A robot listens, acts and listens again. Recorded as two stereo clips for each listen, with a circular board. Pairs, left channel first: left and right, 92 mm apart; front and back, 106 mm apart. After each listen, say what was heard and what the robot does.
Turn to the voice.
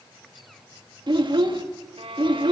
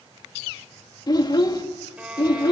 The child speaking: 55° right. Turn 55° right.
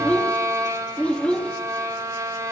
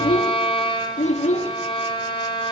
The child speaking is now 10° left. Turn 10° left.
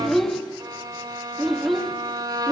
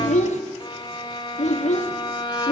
Found it: a child speaking, straight ahead, 1 to 2 m away.